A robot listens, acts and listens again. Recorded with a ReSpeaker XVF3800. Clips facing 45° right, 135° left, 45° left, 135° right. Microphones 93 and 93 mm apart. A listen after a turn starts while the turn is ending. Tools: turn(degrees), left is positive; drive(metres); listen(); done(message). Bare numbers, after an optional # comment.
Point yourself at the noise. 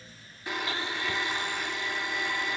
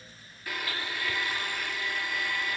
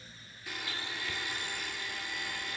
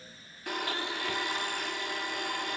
# The blender: 110° right.
turn(-110)
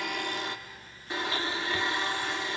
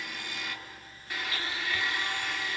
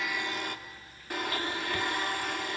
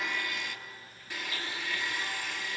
# The blender is now 15° left.
turn(15)
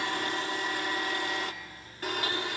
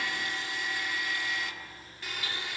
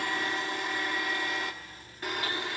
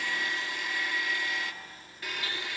done("Facing the blender, 1 to 2 m away.")